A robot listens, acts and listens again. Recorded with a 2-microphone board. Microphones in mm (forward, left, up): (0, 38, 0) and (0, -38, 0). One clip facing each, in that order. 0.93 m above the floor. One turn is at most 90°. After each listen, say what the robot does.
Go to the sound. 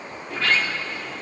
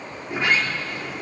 Turn 20° right.
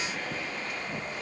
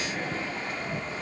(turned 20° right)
Turn 90° right.
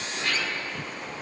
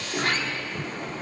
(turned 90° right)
Turn 45° right.
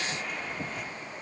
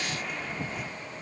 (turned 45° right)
Drive 1.0 m forward.
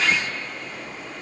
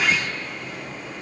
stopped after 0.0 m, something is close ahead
Something is in my way. I am facing the sliding door but have not reached it.